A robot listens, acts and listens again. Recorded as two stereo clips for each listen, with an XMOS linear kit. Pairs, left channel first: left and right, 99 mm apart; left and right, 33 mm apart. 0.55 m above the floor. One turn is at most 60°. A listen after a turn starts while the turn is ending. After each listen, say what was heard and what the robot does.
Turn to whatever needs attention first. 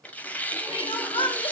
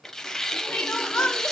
The crying: about 70° left or 110° left. Turn 60° left.
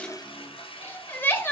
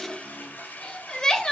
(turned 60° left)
So it is at 25° left. Turn 25° left.
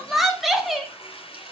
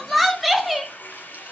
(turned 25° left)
Facing the crying.